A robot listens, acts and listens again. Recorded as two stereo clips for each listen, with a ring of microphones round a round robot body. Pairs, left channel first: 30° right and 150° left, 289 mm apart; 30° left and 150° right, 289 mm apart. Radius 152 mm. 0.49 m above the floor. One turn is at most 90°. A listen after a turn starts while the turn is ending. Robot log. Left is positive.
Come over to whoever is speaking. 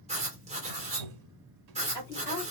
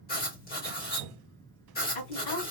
note: The woman speaking: 45° left.
cmd yaw +45
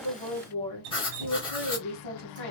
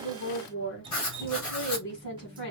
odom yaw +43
cmd fwd 1.0
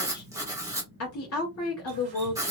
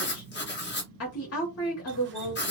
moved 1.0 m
cmd fwd 1.0
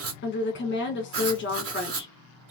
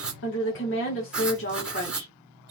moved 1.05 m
cmd fwd 1.0
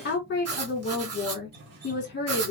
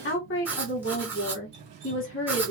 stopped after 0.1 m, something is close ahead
end: I am next to the woman speaking.